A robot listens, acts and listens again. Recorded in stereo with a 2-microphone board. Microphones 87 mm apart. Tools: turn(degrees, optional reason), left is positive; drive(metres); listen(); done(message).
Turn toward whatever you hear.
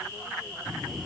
turn(degrees=30)
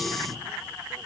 listen()
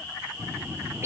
turn(degrees=-30, reason="So it is at 30° right.")
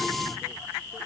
listen()
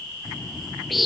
done("Facing the bird, 2 to 4 m away.")